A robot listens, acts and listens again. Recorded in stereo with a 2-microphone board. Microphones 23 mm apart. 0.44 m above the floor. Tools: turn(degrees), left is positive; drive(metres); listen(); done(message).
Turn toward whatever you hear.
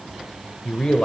turn(degrees=45)
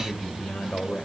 turn(degrees=80)
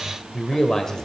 turn(degrees=25)
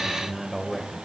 turn(degrees=-15)
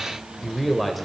done("Facing the man speaking, 1 to 2 m away.")